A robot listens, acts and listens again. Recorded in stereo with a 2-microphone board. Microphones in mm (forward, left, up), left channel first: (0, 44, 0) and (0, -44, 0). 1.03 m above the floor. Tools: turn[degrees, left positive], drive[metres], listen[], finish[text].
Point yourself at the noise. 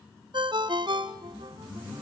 Thought: The ringtone: about 60° right or 120° right.
Action: turn[-60]
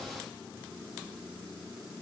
Action: listen[]
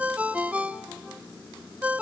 Thought: So it is at 20° right.
Action: turn[-20]
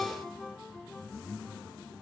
Action: finish[Facing the ringtone, under 1 m away.]